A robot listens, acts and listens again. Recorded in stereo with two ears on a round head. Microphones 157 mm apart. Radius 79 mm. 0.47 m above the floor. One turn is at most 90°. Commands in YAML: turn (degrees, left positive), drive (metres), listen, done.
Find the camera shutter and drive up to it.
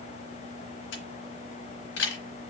turn: 70
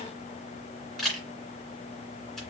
drive: 1.0
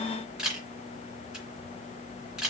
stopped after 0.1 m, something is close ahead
done: "Something is in my way. I am facing the camera shutter but have not reached it."